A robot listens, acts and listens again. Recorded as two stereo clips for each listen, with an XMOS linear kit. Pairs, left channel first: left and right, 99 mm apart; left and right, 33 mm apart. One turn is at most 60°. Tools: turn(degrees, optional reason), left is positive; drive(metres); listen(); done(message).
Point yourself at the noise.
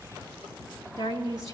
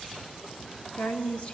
turn(degrees=35, reason="The woman speaking: about 35° left or 145° left.")
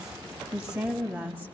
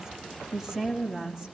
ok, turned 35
turn(degrees=-20, reason="So it is at 20° right.")
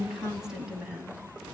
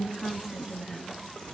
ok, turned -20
turn(degrees=-10, reason="The woman speaking is now 10° right.")
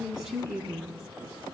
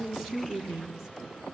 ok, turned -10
turn(degrees=-10, reason="The woman speaking is now 10° right.")
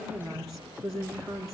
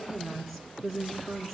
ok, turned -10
done("Found it: a woman speaking, straight ahead.")